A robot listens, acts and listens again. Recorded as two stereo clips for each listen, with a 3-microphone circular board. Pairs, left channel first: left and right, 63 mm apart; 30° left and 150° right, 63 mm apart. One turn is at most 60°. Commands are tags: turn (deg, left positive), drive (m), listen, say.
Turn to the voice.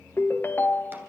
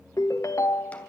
<listen/>
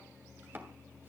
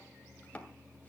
<listen/>
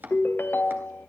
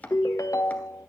<say>I can't make out anyone speaking, only a ringtone and chopping.</say>